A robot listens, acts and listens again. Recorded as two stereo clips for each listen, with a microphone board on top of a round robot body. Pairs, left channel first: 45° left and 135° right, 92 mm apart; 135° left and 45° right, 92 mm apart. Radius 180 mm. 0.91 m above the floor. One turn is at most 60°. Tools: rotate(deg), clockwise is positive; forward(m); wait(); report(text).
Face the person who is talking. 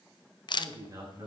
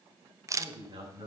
rotate(60)
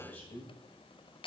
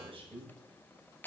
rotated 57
rotate(25)
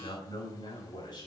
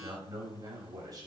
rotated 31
report("Found it: a man speaking, straight ahead.")